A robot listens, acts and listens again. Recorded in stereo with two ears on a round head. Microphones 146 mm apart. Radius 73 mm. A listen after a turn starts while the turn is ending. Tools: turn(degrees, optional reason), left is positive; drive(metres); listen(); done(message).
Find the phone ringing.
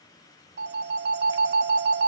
turn(degrees=-70, reason="The phone ringing: about 70° right or 110° right.")
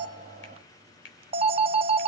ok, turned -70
turn(degrees=-35, reason="So it is at 35° right.")
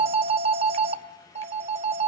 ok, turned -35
turn(degrees=-40, reason="The phone ringing is now 40° right.")
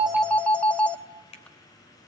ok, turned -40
done("Facing the phone ringing.")